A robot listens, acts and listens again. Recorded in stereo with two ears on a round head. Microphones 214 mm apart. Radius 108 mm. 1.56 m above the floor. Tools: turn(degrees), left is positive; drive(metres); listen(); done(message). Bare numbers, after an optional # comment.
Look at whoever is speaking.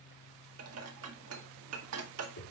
listen()
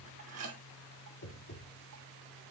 listen()
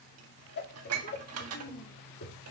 # The child speaking: about 35° left or 145° left.
turn(35)
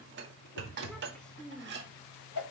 done("Facing the child speaking.")